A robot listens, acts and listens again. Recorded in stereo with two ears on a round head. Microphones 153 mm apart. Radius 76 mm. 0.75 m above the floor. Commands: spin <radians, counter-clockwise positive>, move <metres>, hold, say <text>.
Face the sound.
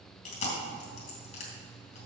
spin 0.79
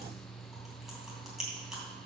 say Facing the chewing, 2 to 4 m away.